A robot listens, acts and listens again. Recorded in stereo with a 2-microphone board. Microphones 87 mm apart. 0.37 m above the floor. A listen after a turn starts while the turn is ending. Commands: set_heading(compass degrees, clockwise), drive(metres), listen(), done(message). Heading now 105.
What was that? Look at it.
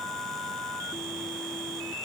listen()
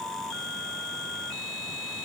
listen()
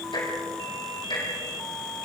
set_heading(15)
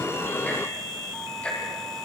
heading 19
set_heading(4)
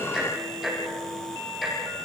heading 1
done("Facing the ticking.")